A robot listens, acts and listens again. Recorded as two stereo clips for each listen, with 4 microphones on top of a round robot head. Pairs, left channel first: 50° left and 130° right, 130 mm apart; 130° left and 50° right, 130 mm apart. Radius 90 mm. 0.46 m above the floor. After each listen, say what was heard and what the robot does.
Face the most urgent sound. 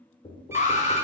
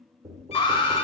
The alarm: 75° left. Turn 75° left.
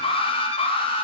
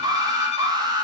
Facing the alarm, 1 to 2 m away.